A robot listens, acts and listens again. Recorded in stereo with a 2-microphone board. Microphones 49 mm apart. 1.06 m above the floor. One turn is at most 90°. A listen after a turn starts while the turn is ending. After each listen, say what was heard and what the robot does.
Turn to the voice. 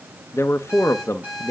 The man speaking: about 70° left or 110° left. Turn 70° left.
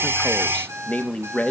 So it is at 30° left. Turn 30° left.
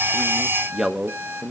Found it: a man speaking, straight ahead, under 1 m away.